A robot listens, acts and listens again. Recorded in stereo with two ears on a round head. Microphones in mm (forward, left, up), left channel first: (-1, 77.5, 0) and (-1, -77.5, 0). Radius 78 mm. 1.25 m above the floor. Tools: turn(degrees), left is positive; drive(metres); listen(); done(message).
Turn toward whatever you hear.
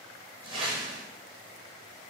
turn(degrees=-30)
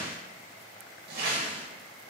turn(degrees=-120)
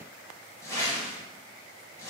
turn(degrees=15)
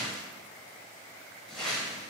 done("Found it: a whoosh, straight ahead, 1 to 2 m away.")